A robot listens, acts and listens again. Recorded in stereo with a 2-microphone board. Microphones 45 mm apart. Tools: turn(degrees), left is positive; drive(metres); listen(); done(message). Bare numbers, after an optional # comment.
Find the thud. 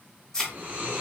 # The thud: about 15° left or 165° left.
turn(15)
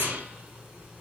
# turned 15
listen()
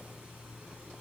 done("I heard a thud, but can't make it out now. It was about straight ahead or 150° left.")